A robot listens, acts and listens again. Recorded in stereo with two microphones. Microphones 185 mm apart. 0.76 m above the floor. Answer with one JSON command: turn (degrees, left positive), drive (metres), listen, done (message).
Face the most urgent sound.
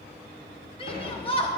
{"turn": 30}
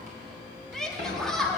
{"done": "Found it: a shout, straight ahead."}